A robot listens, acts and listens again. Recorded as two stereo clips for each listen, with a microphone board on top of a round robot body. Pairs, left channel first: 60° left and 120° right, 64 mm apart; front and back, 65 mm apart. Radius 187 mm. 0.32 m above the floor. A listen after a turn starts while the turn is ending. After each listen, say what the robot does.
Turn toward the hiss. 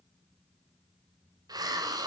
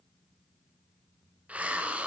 Turn 110° right.
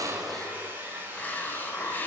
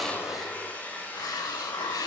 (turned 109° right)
Found it: a hiss, straight ahead, 1 to 2 m away.